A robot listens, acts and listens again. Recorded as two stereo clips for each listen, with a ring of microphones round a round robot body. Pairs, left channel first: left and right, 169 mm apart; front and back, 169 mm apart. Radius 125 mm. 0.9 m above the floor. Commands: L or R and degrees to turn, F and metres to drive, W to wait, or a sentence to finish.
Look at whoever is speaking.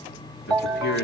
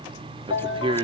L120
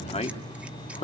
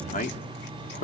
L40
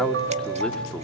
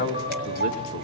W
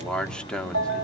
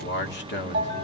Found it: a man speaking, straight ahead.